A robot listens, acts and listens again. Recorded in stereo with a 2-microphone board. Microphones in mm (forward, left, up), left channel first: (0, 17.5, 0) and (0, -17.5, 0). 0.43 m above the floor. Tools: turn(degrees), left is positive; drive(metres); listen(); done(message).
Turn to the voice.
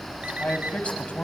turn(degrees=40)
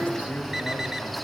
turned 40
listen()
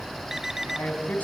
turn(degrees=130)
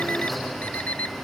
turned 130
listen()
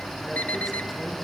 listen()
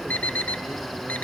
done("Facing where the man speaking came from. I can't hear it now.")